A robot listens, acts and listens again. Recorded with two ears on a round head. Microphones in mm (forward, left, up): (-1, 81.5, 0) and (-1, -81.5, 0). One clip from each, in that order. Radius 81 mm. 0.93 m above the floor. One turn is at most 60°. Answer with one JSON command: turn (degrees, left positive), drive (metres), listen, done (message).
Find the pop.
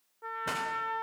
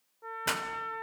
{"turn": -50}
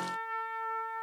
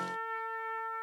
{"listen": true}
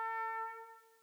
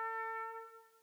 {"done": "I heard a pop, but can't make it out now. It was about straight ahead or 80° right."}